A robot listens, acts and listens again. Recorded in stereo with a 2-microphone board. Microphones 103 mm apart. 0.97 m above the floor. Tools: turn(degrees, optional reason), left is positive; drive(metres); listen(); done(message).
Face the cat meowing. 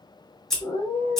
turn(degrees=65, reason="The cat meowing: about 65° left or 115° left.")
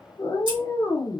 turn(degrees=25, reason="So it is at 25° left.")
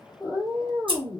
turn(degrees=-15, reason="The cat meowing is now 15° right.")
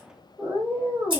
turn(degrees=-20, reason="The cat meowing is now 20° right.")
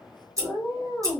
done("Found it: a cat meowing, straight ahead.")